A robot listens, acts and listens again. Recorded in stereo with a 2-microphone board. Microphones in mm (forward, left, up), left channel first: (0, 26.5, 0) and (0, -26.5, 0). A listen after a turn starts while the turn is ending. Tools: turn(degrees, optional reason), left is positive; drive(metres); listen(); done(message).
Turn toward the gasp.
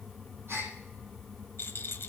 turn(degrees=-50, reason="The gasp: about 50° right or 130° right.")
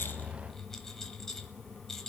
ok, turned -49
listen()
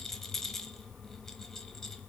done("I heard a gasp, but can't make it out now. It was about straight ahead or 80° right.")